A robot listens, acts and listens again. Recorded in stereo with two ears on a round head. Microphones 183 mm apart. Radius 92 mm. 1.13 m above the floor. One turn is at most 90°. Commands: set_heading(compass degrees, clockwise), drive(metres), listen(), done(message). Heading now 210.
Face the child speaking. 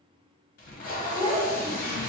set_heading(240)
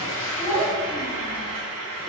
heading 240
set_heading(255)
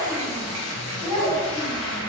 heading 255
set_heading(290)
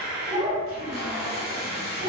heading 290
set_heading(305)
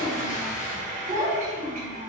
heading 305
done("Found it: a child speaking, straight ahead, 1 to 2 m away.")